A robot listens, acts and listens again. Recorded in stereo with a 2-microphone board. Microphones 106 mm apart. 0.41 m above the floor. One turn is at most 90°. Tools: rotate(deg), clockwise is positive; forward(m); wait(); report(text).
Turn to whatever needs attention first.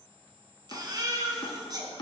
rotate(40)
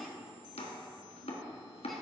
wait()
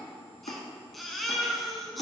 report("Found it: a baby crying, straight ahead.")